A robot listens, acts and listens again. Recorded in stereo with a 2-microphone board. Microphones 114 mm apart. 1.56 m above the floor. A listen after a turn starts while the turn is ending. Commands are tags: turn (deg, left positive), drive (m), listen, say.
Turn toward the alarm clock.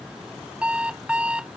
<turn deg="-30"/>
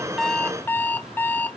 <turn deg="15"/>
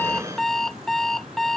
<say>Found it: an alarm clock, straight ahead.</say>